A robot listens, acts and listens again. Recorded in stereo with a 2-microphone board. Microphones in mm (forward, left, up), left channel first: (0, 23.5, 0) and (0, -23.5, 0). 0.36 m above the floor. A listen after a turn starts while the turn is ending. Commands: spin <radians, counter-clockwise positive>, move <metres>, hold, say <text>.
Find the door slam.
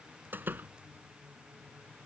spin -0.79
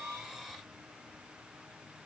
hold
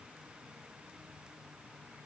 say I heard a door slam, but can't make it out now. It was about straight ahead or 90° right.